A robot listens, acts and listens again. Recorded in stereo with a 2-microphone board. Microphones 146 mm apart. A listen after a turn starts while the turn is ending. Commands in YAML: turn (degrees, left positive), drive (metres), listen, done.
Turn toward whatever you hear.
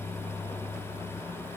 listen: true
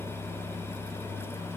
listen: true
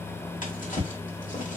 turn: 65
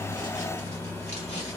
listen: true
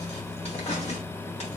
turn: 50
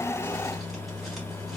listen: true
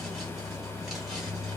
listen: true
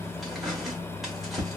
done: "Facing the drawer, 1 to 2 m away."